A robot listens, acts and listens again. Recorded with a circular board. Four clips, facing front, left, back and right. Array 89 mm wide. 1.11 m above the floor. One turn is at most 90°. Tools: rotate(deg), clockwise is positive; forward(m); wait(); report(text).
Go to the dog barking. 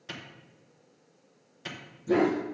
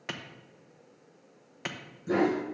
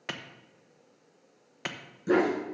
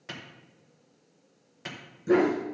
rotate(90)
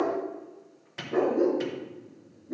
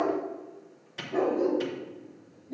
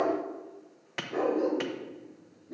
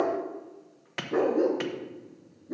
rotate(75)
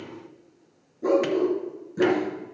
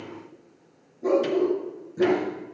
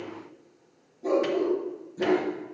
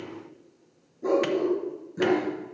rotate(10)
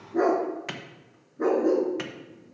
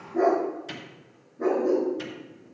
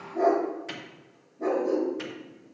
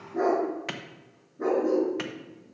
forward(1.0)
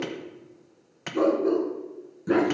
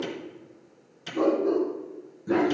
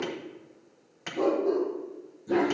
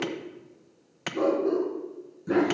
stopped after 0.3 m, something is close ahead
report("Something is in my way. I am facing the dog barking but have not reached it.")